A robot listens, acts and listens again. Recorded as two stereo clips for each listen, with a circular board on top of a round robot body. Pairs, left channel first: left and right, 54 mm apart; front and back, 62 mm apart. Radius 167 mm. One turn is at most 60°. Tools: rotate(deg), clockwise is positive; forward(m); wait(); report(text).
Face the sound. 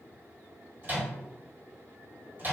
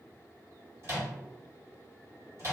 rotate(60)
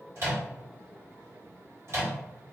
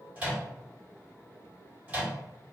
rotate(60)
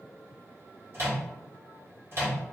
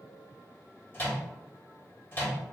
rotate(55)
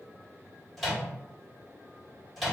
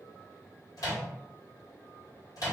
report("Found it: a microwave, straight ahead.")